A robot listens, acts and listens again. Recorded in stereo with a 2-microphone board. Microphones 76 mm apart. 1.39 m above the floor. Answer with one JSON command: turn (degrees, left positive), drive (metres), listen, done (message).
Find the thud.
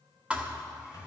{"turn": -15}
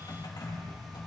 {"listen": true}
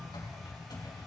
{"done": "I heard a thud, but can't make it out now. It was about straight ahead or 150° right."}